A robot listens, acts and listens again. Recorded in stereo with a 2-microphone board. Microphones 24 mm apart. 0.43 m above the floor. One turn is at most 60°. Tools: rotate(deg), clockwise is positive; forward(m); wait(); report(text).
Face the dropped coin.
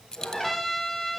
rotate(-30)
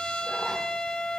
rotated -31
wait()
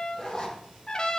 report("I heard a dropped coin, but can't make it out now. It was about 5° right or 120° left.")